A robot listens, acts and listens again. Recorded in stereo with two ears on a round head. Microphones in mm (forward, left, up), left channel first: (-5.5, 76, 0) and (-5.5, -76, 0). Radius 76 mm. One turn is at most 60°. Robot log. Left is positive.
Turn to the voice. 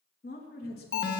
note: The woman speaking: about 60° left or 120° left.
cmd yaw +60
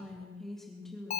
end: Facing the woman speaking.